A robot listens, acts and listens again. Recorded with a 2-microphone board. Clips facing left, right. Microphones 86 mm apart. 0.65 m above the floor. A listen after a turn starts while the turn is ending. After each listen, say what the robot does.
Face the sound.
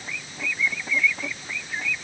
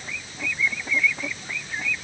Keep listening.
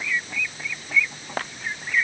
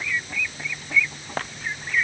Keep listening.
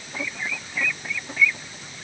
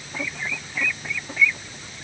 I can't make out anything to turn to.